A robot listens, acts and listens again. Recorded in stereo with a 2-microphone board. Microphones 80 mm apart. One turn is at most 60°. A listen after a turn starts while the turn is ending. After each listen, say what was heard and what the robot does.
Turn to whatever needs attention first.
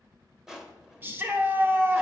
The shout: about 25° right or 155° right. Turn 25° right.
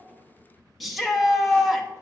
Facing the shout.